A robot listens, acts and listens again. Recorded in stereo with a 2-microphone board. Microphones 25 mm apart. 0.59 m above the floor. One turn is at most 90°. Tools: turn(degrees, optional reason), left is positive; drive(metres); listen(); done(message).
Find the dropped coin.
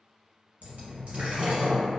turn(degrees=-60, reason="The dropped coin: about 60° right or 120° right.")
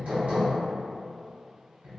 listen()
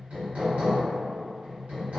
done("I heard a dropped coin, but can't make it out now. It was about straight ahead or 60° right.")